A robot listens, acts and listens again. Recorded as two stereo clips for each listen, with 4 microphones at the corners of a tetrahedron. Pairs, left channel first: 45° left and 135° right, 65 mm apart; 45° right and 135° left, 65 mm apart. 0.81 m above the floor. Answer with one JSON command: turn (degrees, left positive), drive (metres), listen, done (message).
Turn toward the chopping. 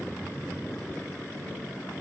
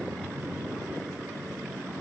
{"listen": true}
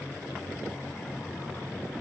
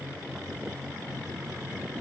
{"listen": true}
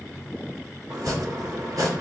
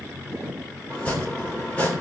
{"turn": -115}
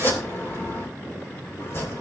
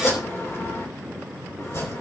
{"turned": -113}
{"done": "Facing the chopping, 2 to 4 m away."}